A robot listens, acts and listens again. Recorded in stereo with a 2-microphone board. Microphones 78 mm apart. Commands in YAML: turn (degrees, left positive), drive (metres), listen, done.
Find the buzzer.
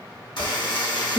turn: 75
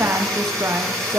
done: "Facing the buzzer."